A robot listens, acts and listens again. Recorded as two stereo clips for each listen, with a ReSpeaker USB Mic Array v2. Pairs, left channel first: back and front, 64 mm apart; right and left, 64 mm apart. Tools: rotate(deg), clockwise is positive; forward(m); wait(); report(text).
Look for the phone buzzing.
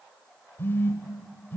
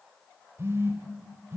rotate(-130)
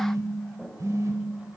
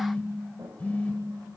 rotate(25)
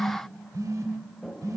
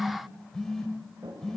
rotate(10)
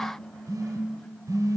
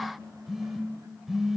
report("Found it: a phone buzzing, straight ahead.")